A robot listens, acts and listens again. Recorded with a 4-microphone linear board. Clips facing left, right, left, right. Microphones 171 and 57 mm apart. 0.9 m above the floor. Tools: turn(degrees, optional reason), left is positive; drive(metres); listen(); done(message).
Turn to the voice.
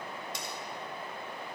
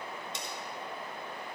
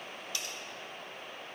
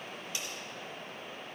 listen()
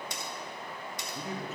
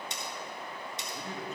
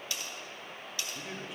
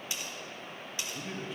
turn(degrees=30)
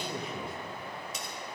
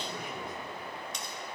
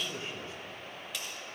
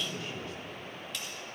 turn(degrees=145, reason="So it is at 145° left.")
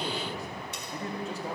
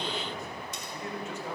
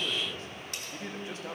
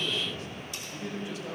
turn(degrees=45, reason="The man speaking is now 45° left.")
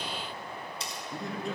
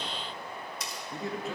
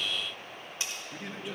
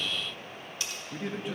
done("Found it: a man speaking, straight ahead.")